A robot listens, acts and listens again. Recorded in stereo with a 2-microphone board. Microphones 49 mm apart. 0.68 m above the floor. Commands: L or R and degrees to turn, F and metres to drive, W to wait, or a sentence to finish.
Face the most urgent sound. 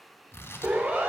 R45
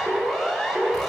R10
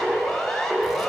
Facing the siren.